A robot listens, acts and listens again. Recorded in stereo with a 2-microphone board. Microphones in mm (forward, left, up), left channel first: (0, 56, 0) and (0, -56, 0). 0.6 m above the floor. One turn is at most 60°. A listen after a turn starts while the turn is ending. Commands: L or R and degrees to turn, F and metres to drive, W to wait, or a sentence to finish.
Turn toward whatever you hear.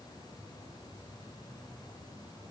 W
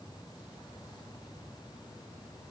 W
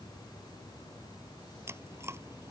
R20
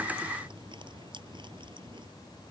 W
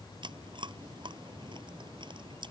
R60
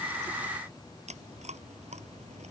R60
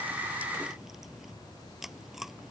Facing the chewing.